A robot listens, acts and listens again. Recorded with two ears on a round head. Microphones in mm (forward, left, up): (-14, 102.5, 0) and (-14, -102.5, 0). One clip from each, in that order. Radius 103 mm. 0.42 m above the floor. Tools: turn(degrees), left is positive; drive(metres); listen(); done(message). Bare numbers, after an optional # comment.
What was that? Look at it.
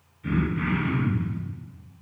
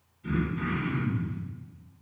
# The throat clearing: about 55° left or 125° left.
turn(55)
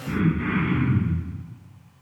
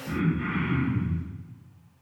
# So it is at 10° left.
turn(10)
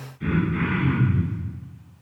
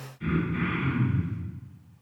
done("Facing the throat clearing, 1 to 2 m away.")